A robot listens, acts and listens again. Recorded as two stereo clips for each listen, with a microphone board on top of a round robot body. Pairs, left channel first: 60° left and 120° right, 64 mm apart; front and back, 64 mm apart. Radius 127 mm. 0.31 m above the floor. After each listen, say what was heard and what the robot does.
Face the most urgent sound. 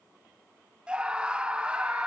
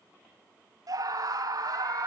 The scream: 165° left. Turn 165° left.
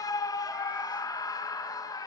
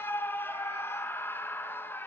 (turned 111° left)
The scream is now 55° left. Turn 55° left.
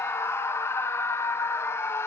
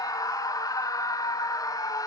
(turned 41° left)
The scream is now 15° left. Turn 15° left.
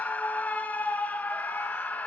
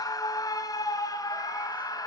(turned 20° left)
Facing the scream.